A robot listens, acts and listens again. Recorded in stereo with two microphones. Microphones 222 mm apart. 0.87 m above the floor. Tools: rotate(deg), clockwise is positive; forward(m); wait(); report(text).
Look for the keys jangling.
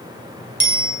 wait()
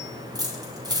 rotate(20)
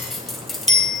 report("Facing the keys jangling, 2 to 4 m away.")